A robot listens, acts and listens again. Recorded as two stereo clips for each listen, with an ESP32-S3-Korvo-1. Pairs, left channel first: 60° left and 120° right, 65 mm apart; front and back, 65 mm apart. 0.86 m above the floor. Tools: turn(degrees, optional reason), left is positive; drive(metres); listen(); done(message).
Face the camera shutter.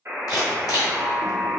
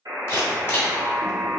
turn(degrees=50, reason="The camera shutter: 50° left.")
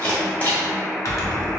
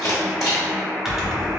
done("Facing the camera shutter, 1 to 2 m away.")